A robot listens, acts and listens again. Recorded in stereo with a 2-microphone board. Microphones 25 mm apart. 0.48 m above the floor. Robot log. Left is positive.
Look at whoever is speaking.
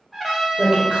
note: The woman speaking: about 50° right or 130° right.
cmd yaw -50
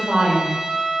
note: So it is at 65° right.
cmd yaw -65
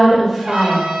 end: Facing the woman speaking, 1 to 2 m away.